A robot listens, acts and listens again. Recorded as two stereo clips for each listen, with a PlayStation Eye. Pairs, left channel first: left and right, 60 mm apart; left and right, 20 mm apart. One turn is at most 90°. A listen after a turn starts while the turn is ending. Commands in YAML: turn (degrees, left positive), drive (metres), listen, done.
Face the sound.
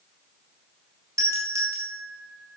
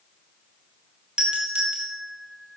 turn: -60
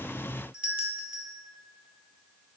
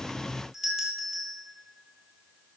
turn: -25
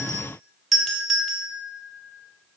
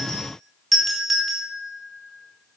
done: "Found it: a doorbell, straight ahead."